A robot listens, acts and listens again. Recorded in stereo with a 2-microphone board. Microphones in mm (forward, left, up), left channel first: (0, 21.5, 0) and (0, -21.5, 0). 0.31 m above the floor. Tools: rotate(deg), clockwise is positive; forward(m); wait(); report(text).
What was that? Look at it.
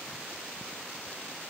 wait()
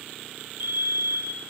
rotate(55)
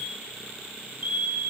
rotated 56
rotate(55)
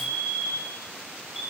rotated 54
report("Found it: a fire alarm, straight ahead.")